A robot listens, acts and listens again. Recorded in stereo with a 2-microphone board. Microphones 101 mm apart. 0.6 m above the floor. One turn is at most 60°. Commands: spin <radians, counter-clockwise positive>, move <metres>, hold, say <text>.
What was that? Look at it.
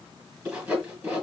spin -0.52
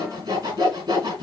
spin -1.05
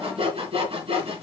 spin -1.05
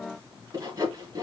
spin -0.79
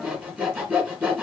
spin -0.17
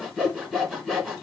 say Facing the sawing.